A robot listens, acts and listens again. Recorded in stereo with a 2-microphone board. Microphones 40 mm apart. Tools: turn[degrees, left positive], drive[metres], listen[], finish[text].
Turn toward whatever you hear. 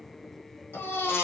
Thought: The baby crying: about 70° left or 110° left.
Action: turn[70]
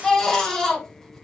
Thought: So it is at 10° left.
Action: turn[10]
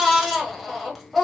Action: finish[Found it: a baby crying, straight ahead, 1 to 2 m away.]